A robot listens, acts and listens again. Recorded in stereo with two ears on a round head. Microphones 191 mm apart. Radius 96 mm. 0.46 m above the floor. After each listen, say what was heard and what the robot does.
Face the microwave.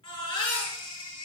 Keep listening.
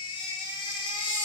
Keep listening.
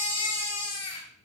I can't make out a microwave to turn to.